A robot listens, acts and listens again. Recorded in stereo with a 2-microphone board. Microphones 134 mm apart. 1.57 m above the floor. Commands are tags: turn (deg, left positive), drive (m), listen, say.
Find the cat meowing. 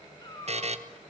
<turn deg="30"/>
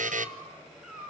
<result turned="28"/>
<say>Found it: a cat meowing, straight ahead, over 4 m away.</say>